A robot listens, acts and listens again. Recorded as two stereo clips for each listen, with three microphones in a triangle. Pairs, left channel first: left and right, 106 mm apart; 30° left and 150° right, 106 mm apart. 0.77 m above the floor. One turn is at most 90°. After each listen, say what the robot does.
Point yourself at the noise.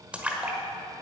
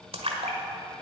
Turn 90° right.
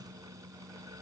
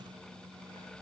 Turn 80° right.
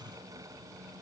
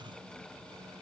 I heard a splash from this way, but can't make it out now.